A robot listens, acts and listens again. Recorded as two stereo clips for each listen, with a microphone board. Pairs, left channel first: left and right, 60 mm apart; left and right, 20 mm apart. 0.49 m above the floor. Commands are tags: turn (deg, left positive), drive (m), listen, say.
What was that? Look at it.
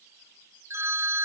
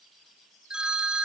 <turn deg="-55"/>
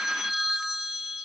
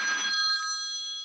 <say>Found it: a phone ringing, straight ahead.</say>